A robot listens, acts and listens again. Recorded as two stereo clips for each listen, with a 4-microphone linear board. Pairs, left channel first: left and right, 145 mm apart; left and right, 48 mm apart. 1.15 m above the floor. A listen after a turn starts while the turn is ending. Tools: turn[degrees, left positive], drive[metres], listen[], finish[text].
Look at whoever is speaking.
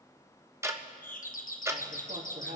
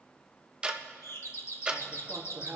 Thought: The man speaking: about 75° right or 105° right.
Action: turn[-75]
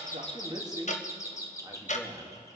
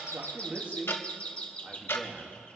Thought: So it is at 25° right.
Action: turn[-25]
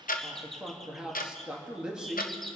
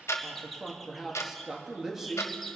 Action: finish[Facing the man speaking, 2 to 4 m away.]